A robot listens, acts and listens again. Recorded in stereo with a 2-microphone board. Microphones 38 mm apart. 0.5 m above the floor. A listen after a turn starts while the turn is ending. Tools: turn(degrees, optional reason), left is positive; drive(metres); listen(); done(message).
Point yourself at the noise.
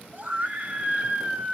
turn(degrees=-30, reason="The scream: about 30° right or 150° right.")
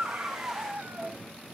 turn(degrees=-115, reason="So it is at 115° right.")
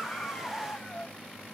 turn(degrees=20, reason="The scream is now 20° left.")
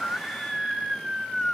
done("Facing the scream.")